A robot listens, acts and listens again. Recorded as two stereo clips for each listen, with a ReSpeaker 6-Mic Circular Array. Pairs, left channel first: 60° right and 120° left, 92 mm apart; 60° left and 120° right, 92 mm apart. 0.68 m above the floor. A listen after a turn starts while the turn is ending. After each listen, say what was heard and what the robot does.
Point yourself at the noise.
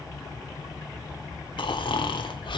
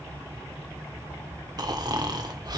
The snoring: 85° right. Turn 85° right.
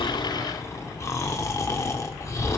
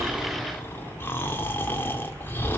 Found it: snoring, straight ahead.